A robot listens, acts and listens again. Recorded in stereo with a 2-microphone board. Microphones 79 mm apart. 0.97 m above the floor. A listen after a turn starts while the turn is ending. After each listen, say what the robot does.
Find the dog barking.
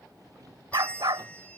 Turn 70° right.
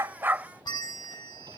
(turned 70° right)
Keep listening.
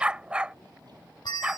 Turn 15° right.
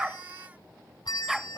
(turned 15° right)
Facing the dog barking.